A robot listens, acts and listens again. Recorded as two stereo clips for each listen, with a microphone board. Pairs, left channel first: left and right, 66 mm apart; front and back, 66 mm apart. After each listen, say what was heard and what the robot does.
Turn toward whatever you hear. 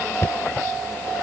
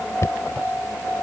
The knocking: 40° left. Turn 40° left.
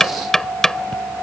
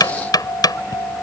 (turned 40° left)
Facing the knocking.